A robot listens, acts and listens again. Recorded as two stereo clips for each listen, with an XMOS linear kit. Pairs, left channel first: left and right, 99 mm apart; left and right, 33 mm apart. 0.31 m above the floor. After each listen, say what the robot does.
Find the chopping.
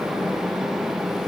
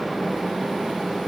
Keep listening.
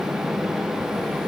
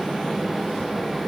Keep listening.
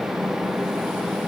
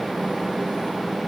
I can't make out chopping.